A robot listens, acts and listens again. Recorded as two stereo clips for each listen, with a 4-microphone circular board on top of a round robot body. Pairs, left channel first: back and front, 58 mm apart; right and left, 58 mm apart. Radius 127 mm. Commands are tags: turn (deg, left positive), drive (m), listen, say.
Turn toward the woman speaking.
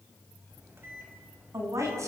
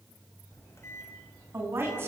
<turn deg="35"/>
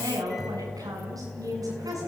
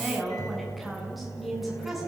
<say>Facing the woman speaking.</say>